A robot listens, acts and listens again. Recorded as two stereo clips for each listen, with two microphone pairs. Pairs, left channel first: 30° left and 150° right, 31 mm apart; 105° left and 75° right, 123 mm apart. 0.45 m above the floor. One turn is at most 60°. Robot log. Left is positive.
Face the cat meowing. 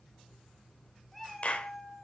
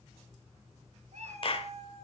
note: The cat meowing: 45° right.
cmd yaw -45
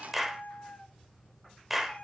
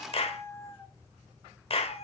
note: The cat meowing is now 75° left.
cmd yaw +60
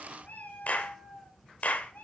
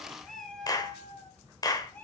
note: The cat meowing is now 30° left.
cmd yaw +30
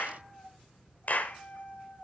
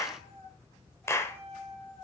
note: The cat meowing is now 20° left.
cmd yaw +20
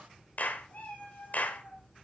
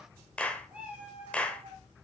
end: Found it: a cat meowing, straight ahead.